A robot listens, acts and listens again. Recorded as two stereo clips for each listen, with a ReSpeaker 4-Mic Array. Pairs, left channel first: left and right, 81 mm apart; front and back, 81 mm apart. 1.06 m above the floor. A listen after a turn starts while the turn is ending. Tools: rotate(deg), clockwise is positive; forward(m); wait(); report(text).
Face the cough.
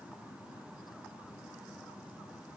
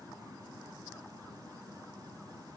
wait()
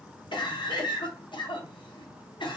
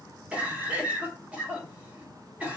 rotate(-105)
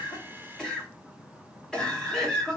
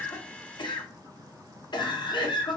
rotate(-10)
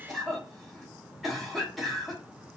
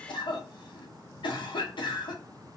report("Facing the cough, under 1 m away.")